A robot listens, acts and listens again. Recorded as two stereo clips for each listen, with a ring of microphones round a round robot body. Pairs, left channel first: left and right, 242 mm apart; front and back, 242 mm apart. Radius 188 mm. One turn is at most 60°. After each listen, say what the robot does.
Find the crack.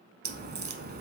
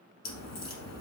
Turn 35° right.
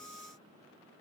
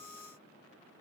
I heard a crack from this way, but can't make it out now.